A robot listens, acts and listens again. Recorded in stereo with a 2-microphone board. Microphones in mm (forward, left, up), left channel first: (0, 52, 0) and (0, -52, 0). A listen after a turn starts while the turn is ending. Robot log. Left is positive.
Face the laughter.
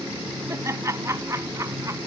note: The laughter: about 30° right or 150° right.
cmd yaw -30
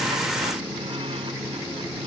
cmd idle
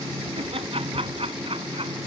note: So it is at 115° right.
cmd yaw -115
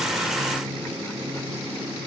cmd idle
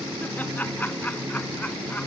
note: The laughter is now 15° left.
cmd yaw +15
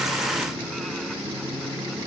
cmd idle
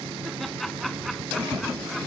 end: Facing the laughter.